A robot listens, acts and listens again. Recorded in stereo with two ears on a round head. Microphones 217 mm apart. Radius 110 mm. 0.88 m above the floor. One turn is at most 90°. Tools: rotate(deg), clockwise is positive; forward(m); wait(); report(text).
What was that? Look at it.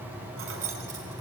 rotate(65)
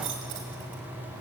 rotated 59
rotate(50)
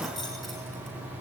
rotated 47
report("Facing the keys jangling.")